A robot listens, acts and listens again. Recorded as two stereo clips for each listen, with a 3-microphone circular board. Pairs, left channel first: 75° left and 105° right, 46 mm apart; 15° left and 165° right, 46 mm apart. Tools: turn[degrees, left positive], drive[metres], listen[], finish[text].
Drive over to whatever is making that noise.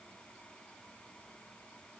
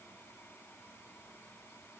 Action: listen[]
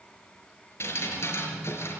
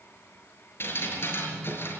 Thought: The dripping: 50° left.
Action: turn[50]
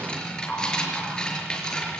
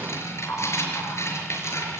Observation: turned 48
Action: drive[1.0]
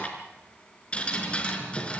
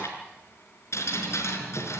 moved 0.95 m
Thought: The dripping is now 10° left.
Action: turn[10]
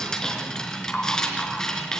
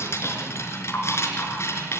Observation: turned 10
Action: drive[1.0]
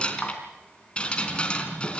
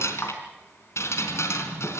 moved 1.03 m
Action: drive[1.0]
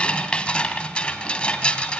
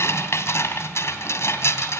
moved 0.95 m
Thought: The dripping is now 10° left.
Action: turn[10]
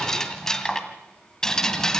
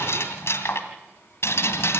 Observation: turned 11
Action: drive[1.0]
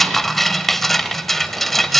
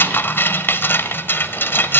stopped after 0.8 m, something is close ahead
Thought: The dripping is now 10° right.
Action: turn[-10]
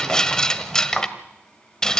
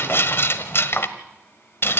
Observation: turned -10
Action: finish[Arrived at the dripping, straight ahead.]